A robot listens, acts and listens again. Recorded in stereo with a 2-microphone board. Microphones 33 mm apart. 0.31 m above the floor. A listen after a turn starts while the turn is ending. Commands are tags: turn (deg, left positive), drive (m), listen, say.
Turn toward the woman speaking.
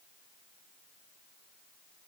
<listen/>
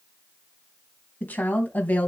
<turn deg="55"/>
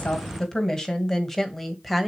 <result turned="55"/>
<say>Facing the woman speaking.</say>